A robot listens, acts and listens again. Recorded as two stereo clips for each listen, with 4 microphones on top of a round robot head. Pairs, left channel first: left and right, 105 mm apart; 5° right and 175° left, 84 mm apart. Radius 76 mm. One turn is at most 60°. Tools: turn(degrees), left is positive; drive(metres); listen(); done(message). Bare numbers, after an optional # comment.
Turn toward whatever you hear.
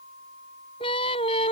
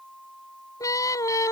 # The singing: 40° left.
turn(40)
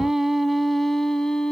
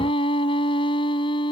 done("Facing the singing.")